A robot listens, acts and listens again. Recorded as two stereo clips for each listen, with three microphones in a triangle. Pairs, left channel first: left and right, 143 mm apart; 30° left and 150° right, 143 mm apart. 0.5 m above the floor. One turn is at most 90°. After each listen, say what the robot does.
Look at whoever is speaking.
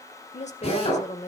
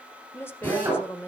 Turn 90° left.
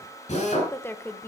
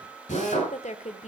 Turn 20° left.
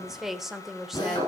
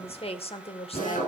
Found it: a woman speaking, straight ahead.